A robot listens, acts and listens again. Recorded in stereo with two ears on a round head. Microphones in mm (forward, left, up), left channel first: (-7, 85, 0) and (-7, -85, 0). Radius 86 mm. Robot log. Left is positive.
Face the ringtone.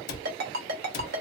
note: The ringtone: about 55° right or 125° right.
cmd yaw -55
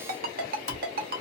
note: So it is at 60° right.
cmd yaw -60
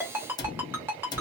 note: The ringtone is now 15° right.
cmd yaw -15
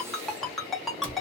end: Facing the ringtone, under 1 m away.